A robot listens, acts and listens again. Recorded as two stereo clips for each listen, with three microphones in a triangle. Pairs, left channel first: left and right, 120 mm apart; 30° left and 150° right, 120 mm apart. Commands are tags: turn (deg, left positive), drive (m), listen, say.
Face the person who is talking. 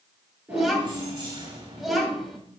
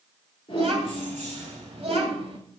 <turn deg="180"/>
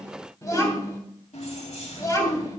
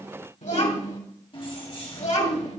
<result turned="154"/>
<turn deg="30"/>
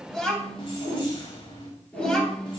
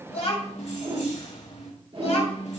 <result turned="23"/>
<say>Found it: a child speaking, straight ahead, 2 to 4 m away.</say>